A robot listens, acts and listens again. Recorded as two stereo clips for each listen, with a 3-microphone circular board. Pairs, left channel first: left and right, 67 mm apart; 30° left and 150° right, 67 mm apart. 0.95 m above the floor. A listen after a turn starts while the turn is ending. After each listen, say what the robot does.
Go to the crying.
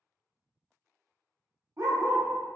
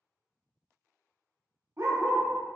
Keep listening.
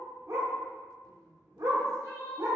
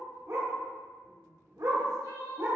Turn 50° left.
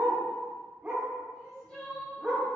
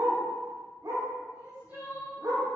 Turn 10° left.
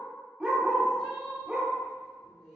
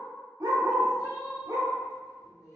Drive 1.0 m forward.
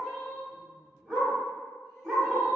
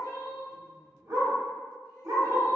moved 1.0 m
Turn 10° left.
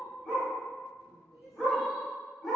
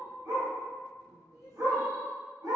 Drive 1.0 m forward.
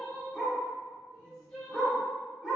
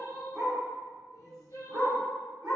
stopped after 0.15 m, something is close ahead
Arrived at the crying, straight ahead.